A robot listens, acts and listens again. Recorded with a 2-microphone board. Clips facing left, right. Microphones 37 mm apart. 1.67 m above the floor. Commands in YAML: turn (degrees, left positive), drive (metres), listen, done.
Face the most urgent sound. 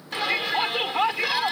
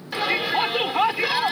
turn: -30
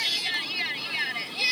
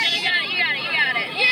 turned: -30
turn: -145
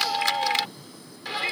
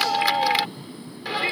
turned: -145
turn: -10
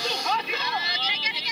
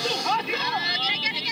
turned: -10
done: "Facing the shout."